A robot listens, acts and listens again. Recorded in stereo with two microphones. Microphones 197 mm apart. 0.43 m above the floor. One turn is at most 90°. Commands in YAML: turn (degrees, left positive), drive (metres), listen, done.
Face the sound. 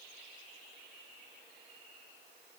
listen: true
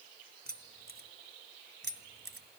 turn: -60
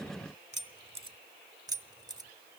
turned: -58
turn: -20
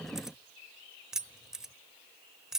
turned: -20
done: "Found it: keys jangling, straight ahead, 1 to 2 m away."